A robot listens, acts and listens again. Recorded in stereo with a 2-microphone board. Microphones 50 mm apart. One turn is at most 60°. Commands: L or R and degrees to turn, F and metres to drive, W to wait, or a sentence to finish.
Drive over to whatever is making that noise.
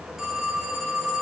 R30
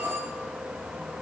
R60
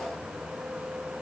R60
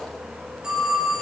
R15
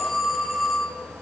F1.0
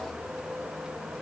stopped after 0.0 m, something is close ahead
W
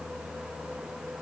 W
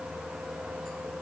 Facing where the phone ringing came from. I can't hear it now. I did not reach it.